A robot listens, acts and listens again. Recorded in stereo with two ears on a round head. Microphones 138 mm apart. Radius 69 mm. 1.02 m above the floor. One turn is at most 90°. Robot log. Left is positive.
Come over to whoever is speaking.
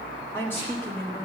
note: The woman speaking: about 15° left or 165° left.
cmd yaw +15
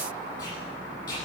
cmd idle
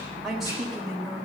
cmd fwd 1.0
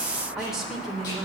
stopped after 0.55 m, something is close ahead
end: Something is in my way. I am facing the woman speaking but have not reached it.